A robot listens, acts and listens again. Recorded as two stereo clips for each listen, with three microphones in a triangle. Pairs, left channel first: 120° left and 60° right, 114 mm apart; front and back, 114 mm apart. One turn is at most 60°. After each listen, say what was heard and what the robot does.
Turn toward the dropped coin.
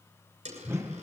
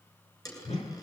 The dropped coin: 60° right. Turn 60° right.
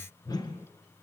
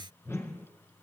I heard a dropped coin from this way, but can't make it out now.